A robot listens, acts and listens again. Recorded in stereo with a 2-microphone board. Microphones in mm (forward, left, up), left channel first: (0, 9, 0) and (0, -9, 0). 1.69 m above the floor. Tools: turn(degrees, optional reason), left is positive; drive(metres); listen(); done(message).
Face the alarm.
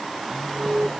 turn(degrees=-90)
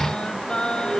turn(degrees=-10, reason="So it is at 10° right.")
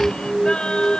done("Facing the alarm.")